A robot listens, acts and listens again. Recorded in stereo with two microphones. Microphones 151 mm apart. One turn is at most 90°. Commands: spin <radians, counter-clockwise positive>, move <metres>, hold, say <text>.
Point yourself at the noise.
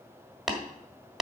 spin 0.52
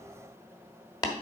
spin 1.57
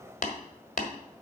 spin 1.05
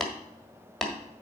say Found it: tapping, straight ahead, 1 to 2 m away.